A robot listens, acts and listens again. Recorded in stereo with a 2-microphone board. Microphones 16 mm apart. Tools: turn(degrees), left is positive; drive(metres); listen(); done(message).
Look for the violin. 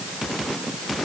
listen()
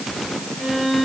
turn(degrees=-55)
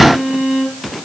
turn(degrees=-70)
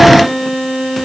turn(degrees=-20)
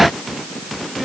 listen()
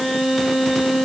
done("Found it: a violin, straight ahead.")